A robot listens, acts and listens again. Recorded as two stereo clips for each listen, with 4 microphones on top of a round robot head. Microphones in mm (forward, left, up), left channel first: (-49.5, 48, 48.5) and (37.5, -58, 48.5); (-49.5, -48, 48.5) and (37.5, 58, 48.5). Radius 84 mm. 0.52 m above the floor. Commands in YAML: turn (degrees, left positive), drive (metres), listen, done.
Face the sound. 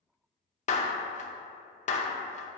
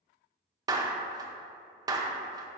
turn: 110
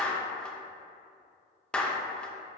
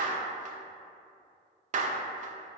turn: 45
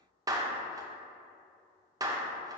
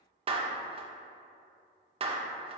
turn: 10
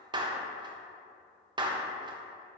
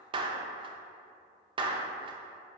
done: "Found it: a clap, straight ahead, under 1 m away."